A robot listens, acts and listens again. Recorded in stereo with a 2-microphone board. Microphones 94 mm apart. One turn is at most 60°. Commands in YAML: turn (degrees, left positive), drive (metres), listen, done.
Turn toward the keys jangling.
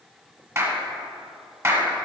listen: true
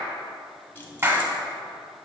turn: 25
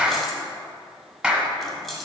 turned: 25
done: "Found it: keys jangling, straight ahead, 1 to 2 m away."